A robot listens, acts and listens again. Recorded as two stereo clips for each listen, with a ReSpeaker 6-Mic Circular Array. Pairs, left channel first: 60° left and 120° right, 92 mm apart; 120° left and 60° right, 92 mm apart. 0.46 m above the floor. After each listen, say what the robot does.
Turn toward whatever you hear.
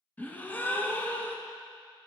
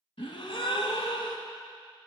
Turn 130° left.
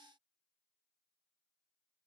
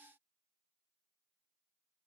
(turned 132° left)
Facing where the gasp came from. I can't hear it now.